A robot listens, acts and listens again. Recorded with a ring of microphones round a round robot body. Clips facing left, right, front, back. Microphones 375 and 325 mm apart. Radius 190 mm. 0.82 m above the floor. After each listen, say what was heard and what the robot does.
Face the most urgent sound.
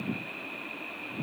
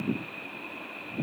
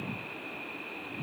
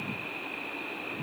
Keep listening.
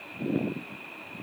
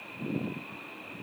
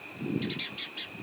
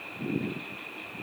Keep listening.
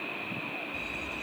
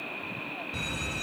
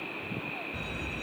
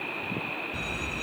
The alarm: 100° right. Turn 100° right.
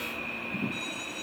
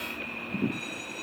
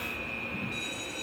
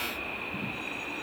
Facing the alarm.